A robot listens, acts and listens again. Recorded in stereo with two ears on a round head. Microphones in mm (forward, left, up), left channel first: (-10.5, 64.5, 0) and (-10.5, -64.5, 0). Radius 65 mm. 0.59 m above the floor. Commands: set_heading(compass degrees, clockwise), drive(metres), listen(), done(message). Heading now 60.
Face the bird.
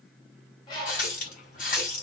set_heading(30)
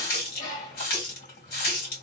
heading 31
set_heading(271)
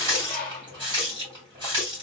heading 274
done("Found it: a bird, straight ahead, 1 to 2 m away.")